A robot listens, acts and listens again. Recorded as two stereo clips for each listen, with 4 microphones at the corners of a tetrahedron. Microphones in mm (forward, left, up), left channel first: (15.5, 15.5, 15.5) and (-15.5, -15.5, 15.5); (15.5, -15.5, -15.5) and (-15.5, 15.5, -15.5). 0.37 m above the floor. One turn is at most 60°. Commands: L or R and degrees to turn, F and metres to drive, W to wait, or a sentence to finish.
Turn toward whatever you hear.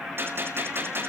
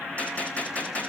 R60
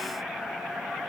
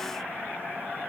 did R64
R40
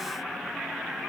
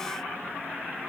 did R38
Facing where the gunshot came from. I can't hear it now.